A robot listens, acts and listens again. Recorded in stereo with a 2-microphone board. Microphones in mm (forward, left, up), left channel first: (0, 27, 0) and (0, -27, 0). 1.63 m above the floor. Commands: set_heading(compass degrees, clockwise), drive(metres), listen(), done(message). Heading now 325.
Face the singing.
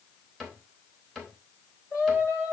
set_heading(285)
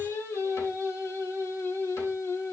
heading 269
set_heading(189)
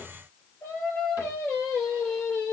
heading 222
set_heading(192)
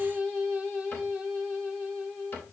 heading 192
done("Facing the singing.")